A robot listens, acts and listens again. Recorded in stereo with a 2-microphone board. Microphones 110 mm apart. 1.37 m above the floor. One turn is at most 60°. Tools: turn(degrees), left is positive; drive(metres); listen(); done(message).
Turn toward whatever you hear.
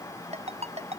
turn(degrees=-60)
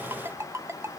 turn(degrees=-25)
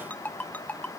turn(degrees=15)
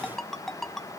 done("Found it: a ringtone, straight ahead.")